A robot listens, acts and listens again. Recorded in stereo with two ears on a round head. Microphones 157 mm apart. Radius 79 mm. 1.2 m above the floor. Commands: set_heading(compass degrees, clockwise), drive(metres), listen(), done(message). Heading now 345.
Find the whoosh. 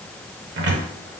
listen()
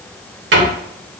listen()
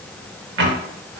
done("I can't make out a whoosh, only a cupboard door.")